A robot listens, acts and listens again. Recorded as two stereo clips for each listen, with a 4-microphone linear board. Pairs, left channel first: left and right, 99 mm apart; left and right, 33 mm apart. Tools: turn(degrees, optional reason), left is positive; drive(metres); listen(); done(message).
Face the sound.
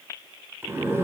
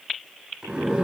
turn(degrees=-25, reason="The zipper: about 25° right or 155° right.")
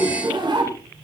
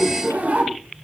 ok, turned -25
turn(degrees=-130, reason="So it is at 130° right.")
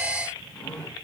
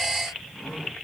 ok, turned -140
turn(degrees=10, reason="The zipper is now 10° left.")
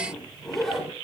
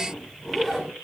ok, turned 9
done("Facing the zipper.")